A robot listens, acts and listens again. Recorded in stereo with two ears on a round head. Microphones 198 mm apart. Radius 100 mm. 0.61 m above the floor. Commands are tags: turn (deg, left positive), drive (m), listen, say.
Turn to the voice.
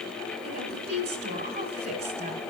<turn deg="-45"/>
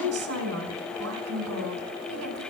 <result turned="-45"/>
<turn deg="-90"/>
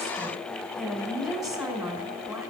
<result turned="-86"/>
<say>Facing the woman speaking, 2 to 4 m away.</say>